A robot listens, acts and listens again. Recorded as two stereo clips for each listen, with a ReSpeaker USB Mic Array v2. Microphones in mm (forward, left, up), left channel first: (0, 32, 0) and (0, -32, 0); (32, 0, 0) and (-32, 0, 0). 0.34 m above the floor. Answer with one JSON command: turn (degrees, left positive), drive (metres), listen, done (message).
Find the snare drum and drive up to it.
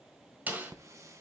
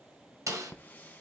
{"turn": -155}
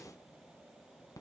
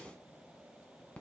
{"listen": true}
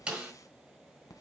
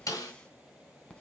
{"turn": -25}
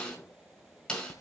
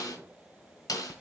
{"turn": 10}
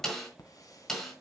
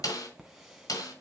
{"drive": 1.0}
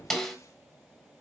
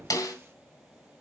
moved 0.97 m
{"drive": 1.0}
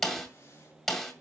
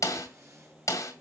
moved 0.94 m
{"drive": 1.0}
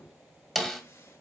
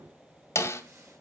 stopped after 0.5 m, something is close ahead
{"done": "Arrived at the snare drum, straight ahead."}